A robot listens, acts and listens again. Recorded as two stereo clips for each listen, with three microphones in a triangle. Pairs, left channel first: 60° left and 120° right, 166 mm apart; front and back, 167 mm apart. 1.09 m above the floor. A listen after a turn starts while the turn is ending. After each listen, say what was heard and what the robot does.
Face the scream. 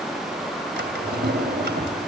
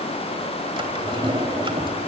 Keep listening.
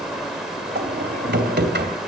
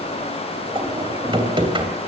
Keep listening.
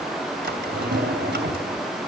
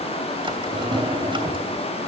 I can't make out a scream, only a drawer.